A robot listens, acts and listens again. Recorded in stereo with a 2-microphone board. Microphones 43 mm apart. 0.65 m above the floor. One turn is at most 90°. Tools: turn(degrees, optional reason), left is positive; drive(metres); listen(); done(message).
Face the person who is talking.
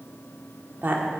turn(degrees=-50, reason="The woman speaking: about 50° right or 130° right.")
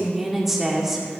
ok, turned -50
turn(degrees=-10, reason="So it is at 10° right.")
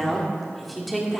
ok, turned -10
done("Facing the woman speaking, 1 to 2 m away.")